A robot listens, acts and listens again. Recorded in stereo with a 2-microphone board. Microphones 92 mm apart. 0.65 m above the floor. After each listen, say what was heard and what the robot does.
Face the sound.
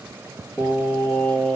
The singing: about 15° left or 165° left. Turn 15° left.
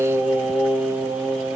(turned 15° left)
Turn 30° right.
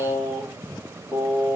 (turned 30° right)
So it is at 25° left. Turn 25° left.
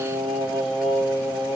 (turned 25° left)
Found it: singing, straight ahead.